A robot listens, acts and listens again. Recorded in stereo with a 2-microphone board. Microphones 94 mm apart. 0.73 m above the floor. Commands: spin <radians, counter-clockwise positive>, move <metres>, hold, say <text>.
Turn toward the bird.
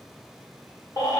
hold
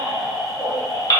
hold
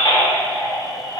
say I can't make out a bird, only a baby crying.